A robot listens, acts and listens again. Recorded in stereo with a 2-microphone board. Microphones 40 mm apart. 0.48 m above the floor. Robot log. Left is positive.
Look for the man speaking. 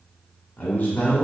note: The man speaking: about 45° left or 135° left.
cmd yaw +45
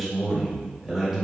note: So it is at 15° right.
cmd yaw -15
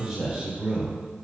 note: The man speaking is now 25° right.
cmd yaw -25
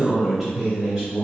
note: The man speaking is now 15° right.
cmd yaw -15
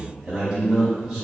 note: The man speaking is now 10° right.
cmd yaw -10
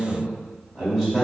end: Facing the man speaking.